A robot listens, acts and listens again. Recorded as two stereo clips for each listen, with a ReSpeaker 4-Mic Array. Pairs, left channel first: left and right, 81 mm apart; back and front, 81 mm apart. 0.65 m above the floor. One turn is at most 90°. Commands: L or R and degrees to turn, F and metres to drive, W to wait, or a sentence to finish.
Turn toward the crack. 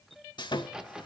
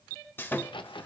R90
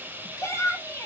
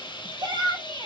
R80
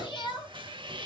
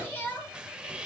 Facing where the crack came from. I can't hear it now.